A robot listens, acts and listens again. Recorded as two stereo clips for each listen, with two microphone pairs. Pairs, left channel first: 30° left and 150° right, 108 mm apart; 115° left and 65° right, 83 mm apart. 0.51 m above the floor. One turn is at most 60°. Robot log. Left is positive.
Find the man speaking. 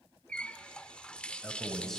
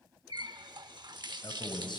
note: The man speaking: 115° left.
cmd yaw +60
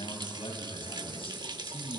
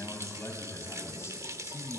note: The man speaking is now 60° left.
cmd yaw +60
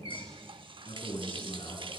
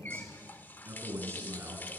end: Found it: a man speaking, straight ahead.